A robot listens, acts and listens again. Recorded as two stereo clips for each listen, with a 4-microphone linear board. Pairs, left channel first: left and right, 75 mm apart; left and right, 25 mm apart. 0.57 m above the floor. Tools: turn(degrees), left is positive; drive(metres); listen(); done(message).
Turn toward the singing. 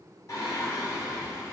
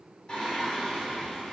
turn(degrees=45)
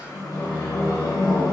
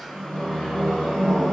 turn(degrees=100)
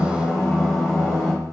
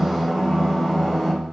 turn(degrees=20)
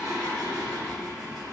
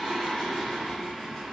done("Facing the singing.")